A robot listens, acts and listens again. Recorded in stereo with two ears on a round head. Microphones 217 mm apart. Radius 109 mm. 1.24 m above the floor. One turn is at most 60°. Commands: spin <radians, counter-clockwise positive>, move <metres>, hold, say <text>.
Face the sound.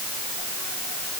hold
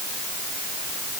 hold
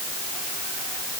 say I can't make out anything to turn to.